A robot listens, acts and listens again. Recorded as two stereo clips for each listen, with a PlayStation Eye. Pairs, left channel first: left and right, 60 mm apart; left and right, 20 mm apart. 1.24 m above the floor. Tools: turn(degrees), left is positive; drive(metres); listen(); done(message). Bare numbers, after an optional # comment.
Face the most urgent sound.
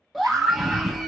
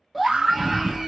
turn(30)
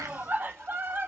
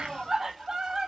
# So it is at 30° right.
turn(-30)
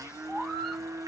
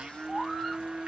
# The scream is now 10° left.
turn(10)
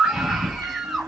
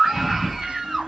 done("Facing the scream, under 1 m away.")